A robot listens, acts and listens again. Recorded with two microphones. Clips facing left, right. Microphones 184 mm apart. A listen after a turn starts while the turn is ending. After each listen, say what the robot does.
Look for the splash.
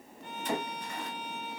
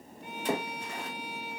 Turn 70° right.
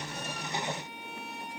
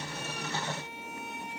Keep listening.
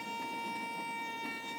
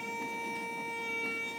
I heard a splash, but can't make it out now. It was about straight ahead or 40° right.